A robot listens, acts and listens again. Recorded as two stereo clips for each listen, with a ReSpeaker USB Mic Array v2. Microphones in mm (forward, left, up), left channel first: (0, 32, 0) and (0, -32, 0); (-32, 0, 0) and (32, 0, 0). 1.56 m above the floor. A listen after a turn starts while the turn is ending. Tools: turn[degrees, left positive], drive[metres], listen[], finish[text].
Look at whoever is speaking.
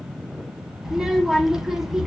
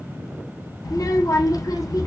Thought: The child speaking: 175° right.
Action: turn[-175]
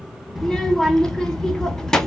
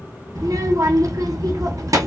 Thought: The child speaking is now 10° left.
Action: turn[10]
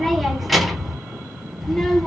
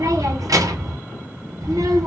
Action: finish[Facing the child speaking.]